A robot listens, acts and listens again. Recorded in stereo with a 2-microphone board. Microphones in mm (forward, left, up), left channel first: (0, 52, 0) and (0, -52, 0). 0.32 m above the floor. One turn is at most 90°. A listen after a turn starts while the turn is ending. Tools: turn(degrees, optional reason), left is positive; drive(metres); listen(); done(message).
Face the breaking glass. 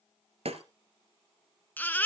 turn(degrees=-70, reason="The breaking glass: about 70° right or 110° right.")
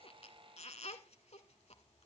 listen()
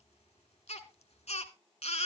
done("I heard breaking glass, but can't make it out now. It was about straight ahead or 40° right.")